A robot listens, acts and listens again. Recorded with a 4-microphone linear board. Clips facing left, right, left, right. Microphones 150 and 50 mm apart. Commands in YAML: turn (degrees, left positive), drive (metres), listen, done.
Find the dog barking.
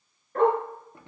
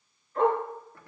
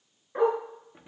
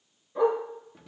turn: 65
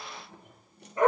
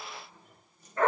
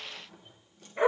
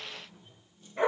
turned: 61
turn: 15
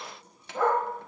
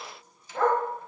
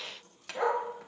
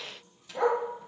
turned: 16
done: "Facing the dog barking, 2 to 4 m away."